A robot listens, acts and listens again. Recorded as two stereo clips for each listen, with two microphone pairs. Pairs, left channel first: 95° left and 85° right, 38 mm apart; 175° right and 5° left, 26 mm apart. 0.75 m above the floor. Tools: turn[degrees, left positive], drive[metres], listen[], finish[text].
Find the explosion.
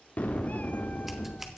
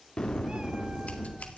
Thought: The explosion: 130° left.
Action: turn[130]
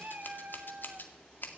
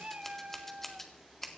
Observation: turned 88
Thought: Nothing new. It was at 40° left.
Action: turn[40]
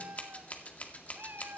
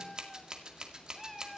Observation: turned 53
Thought: Nothing new. It was at 10° right.
Action: turn[-10]
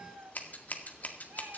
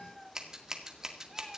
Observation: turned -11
Action: finish[Facing where the explosion came from. I can't hear it now.]